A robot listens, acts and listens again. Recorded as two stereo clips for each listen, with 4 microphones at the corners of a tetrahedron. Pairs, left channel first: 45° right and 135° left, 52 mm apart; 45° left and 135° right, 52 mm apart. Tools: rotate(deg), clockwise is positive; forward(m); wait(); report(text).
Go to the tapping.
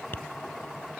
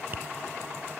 rotate(90)
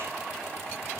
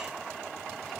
wait()
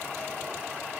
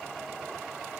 wait()
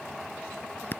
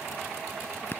forward(1.0)
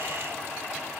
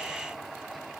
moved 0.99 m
wait()
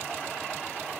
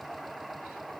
wait()
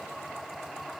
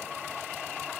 report("Facing where the tapping came from. I can't hear it now. I did not reach it.")